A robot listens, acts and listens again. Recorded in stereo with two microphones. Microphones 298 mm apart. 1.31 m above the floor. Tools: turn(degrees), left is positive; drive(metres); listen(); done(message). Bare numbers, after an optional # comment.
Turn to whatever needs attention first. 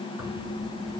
listen()
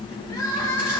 turn(30)
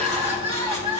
# So it is at 20° right.
turn(-20)
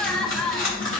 done("Found it: crying, straight ahead, 1 to 2 m away.")